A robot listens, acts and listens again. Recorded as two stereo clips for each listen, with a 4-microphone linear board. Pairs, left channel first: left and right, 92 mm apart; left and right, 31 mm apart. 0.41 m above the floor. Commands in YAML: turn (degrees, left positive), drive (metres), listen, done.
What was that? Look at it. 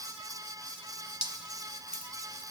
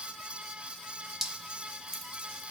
turn: -30
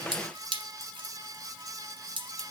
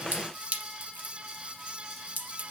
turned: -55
turn: -115
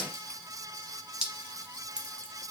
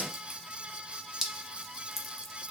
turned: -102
turn: -10
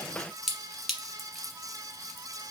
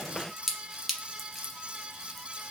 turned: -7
done: "Found it: dripping, straight ahead."